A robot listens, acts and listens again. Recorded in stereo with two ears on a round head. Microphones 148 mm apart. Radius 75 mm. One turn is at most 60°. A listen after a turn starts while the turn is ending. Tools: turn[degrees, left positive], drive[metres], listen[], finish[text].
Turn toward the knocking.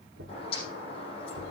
Action: turn[-60]
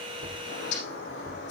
Thought: Nothing new. It was at 30° right.
Action: turn[-30]
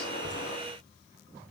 Action: listen[]
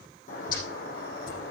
Action: finish[Facing where the knocking came from. I can't hear it now.]